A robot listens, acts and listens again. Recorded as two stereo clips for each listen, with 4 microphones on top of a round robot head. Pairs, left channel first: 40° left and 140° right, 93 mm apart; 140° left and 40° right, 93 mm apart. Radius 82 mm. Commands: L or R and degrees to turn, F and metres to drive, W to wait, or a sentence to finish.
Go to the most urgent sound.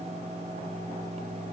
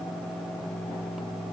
W
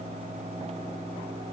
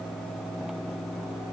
W
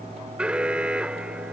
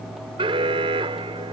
R60
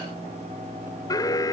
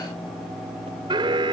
R10
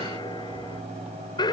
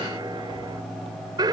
F1.0
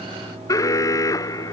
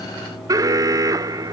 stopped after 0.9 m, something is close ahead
I am next to the alarm.